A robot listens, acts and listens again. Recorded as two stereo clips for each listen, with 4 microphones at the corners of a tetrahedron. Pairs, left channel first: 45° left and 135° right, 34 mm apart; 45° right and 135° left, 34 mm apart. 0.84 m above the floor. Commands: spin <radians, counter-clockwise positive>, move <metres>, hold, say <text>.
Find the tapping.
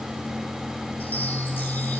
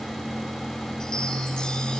hold
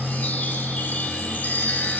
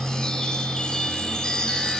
hold
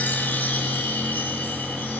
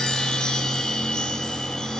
say I can't make out tapping, only a chime.